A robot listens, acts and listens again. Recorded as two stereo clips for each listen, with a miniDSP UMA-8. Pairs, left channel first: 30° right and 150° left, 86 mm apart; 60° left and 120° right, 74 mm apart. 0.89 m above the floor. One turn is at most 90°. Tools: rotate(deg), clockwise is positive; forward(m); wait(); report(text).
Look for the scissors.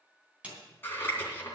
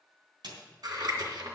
rotate(90)
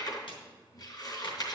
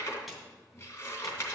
rotate(-10)
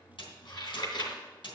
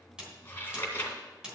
report("Found it: scissors, straight ahead, 2 to 4 m away.")